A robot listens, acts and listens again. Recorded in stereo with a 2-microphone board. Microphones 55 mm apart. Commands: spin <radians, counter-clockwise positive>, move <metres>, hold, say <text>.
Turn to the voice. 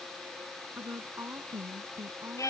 spin -0.79
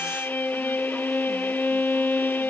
hold
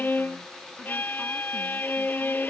hold
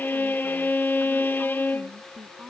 say Facing the woman speaking.